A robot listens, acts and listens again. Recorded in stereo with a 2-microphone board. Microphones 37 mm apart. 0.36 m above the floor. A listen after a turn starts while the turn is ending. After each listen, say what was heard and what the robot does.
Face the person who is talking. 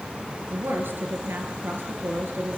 The woman speaking: about 70° right or 110° right. Turn 70° right.
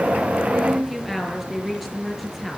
Found it: a woman speaking, straight ahead.